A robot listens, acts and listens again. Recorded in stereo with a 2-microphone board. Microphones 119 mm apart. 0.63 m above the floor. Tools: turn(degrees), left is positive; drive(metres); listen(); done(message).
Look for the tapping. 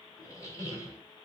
listen()
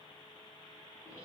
listen()
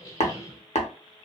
turn(degrees=65)
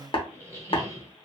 turn(degrees=50)
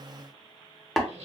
done("Found it: tapping, straight ahead, under 1 m away.")